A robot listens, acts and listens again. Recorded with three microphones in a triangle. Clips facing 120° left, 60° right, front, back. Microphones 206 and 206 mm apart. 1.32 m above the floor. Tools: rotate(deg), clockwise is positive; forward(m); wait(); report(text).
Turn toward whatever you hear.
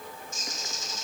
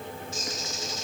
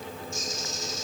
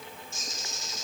rotate(-160)
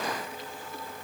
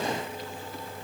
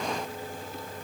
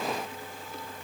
wait()
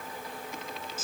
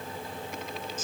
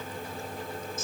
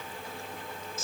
rotate(-40)
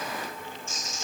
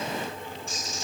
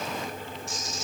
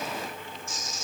rotate(10)
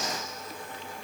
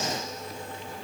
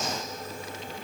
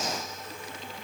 wait()
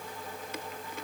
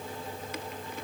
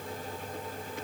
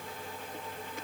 wait()
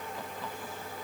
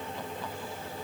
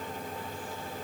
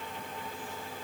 report("I heard a bird from this way, but can't make it out now.")